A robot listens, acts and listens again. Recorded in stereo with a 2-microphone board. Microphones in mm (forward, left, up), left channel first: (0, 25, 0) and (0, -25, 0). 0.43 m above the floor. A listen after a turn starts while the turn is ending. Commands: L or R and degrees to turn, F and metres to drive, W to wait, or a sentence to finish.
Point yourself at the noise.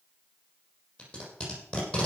L30
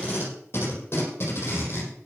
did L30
L135
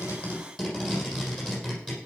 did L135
Found it: tape being pulled, straight ahead.